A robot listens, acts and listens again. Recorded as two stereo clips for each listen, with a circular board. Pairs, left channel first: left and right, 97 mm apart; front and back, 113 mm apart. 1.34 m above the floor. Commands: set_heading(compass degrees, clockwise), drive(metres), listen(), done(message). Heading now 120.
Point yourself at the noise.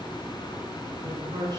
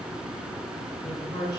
set_heading(170)
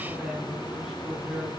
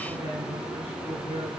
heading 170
set_heading(180)
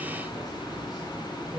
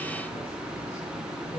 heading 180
done("Facing the man speaking.")